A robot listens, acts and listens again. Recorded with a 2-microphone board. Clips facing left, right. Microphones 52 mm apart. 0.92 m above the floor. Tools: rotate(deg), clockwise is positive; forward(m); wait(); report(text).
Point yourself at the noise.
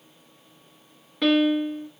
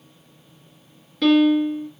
rotate(-30)
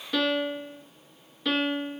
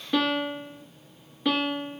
rotate(15)
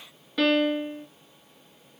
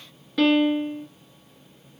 report("Found it: a piano, straight ahead.")